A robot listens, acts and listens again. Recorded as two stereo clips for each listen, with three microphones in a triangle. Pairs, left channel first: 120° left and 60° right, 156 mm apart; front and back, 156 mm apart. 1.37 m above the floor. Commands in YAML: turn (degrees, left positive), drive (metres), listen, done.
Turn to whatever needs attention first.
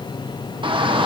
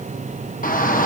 done: "Facing the shout, 1 to 2 m away."